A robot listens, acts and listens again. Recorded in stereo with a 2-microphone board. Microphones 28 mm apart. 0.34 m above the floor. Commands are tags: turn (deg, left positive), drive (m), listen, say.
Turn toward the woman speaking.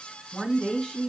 <turn deg="30"/>
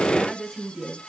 <say>Found it: a woman speaking, straight ahead, 2 to 4 m away.</say>